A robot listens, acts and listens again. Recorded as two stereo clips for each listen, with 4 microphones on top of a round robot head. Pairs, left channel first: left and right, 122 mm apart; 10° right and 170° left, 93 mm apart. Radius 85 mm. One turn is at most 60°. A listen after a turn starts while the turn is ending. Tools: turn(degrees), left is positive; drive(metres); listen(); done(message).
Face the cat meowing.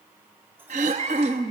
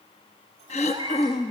turn(degrees=-60)
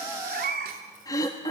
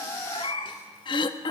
turn(degrees=-60)
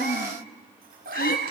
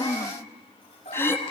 turn(degrees=-60)
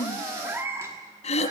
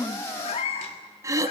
turn(degrees=-25)
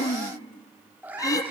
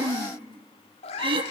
turn(degrees=-10)
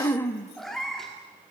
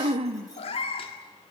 done("Facing the cat meowing, 1 to 2 m away.")